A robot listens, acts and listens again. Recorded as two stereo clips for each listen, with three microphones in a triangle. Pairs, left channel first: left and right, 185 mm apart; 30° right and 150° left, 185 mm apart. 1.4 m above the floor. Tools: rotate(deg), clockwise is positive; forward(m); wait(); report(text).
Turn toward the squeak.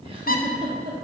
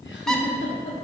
rotate(-55)
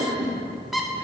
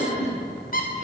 report("Facing the squeak, under 1 m away.")